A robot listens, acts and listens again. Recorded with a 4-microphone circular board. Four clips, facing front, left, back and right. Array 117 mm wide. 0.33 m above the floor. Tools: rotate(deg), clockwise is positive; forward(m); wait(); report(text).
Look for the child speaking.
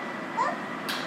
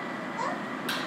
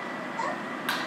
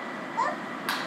rotate(45)
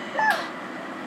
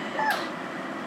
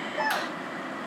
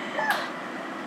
report("Facing the child speaking.")